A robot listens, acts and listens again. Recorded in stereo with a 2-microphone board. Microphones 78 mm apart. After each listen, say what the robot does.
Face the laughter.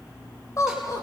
Turn 45° left.
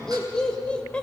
Turn 15° left.
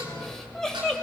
Turn 10° left.
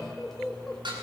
Turn 10° left.
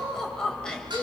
Turn 15° left.
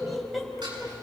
Found it: laughter, straight ahead.